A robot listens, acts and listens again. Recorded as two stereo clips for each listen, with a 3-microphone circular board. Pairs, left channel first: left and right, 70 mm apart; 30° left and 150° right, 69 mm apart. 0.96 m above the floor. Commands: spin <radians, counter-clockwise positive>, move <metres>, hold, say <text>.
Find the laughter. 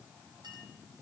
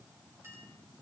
hold
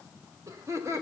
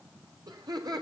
spin -2.36
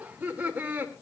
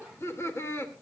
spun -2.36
spin -0.44
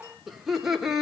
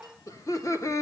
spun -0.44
spin -0.17
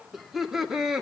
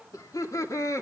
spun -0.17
spin -0.17
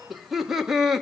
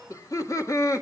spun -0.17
say Facing the laughter, 2 to 4 m away.